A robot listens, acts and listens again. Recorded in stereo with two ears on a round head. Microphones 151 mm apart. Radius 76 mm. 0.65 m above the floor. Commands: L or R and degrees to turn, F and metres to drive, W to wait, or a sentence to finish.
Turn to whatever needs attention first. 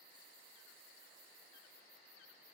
W
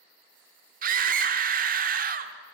R55
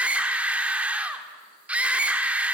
R10
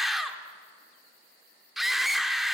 Facing the scream, 1 to 2 m away.